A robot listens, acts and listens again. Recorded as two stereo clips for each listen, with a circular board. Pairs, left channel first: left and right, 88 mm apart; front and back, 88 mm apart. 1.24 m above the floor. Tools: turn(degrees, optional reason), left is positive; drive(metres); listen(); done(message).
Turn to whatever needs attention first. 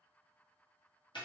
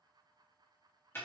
listen()
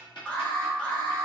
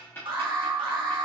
turn(degrees=165, reason="The alarm: 165° left.")
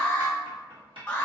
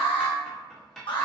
turn(degrees=15, reason="The alarm is now 15° left.")
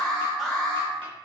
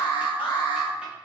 done("Facing the alarm, 1 to 2 m away.")